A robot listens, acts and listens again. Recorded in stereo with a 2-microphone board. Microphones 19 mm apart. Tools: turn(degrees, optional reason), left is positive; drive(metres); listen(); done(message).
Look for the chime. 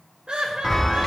turn(degrees=25, reason="The chime: about 25° left or 155° left.")
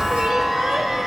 done("Found it: a chime, straight ahead.")